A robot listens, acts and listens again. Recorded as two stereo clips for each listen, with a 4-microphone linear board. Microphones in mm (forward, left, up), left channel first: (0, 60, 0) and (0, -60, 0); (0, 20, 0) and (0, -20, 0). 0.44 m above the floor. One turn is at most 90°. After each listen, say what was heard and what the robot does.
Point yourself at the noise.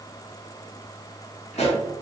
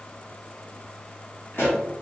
The pop: about 70° left or 110° left. Turn 70° left.
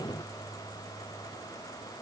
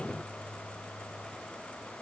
Keep listening.
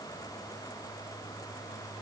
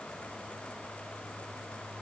I heard a pop, but can't make it out now. It was about straight ahead or 40° left.